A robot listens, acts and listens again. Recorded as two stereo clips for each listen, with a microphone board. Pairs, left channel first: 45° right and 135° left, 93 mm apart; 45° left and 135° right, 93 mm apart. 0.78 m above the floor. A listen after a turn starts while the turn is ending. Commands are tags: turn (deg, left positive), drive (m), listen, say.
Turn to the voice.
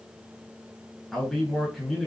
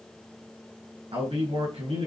<turn deg="-135"/>
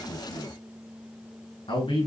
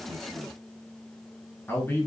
<turn deg="-20"/>
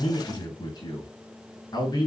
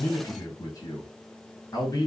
<say>Found it: a man speaking, straight ahead.</say>